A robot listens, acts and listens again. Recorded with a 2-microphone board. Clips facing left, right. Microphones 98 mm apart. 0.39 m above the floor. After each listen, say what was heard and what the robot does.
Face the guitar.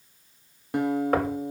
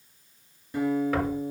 The guitar: about 70° left or 110° left. Turn 70° left.
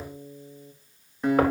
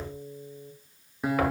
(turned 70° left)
Found it: a guitar, straight ahead, 1 to 2 m away.